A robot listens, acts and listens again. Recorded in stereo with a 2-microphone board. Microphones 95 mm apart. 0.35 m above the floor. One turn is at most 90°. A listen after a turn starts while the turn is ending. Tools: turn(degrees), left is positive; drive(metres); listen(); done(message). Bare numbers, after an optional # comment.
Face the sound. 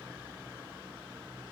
listen()
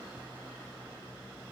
listen()
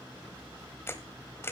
# The camera shutter: about 25° left or 155° left.
turn(25)
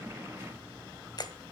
# So it is at 125° left.
turn(90)
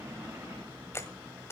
# The camera shutter is now 35° left.
turn(35)
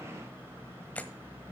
# The camera shutter is now 20° left.
turn(20)
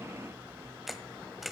done("Found it: a camera shutter, straight ahead.")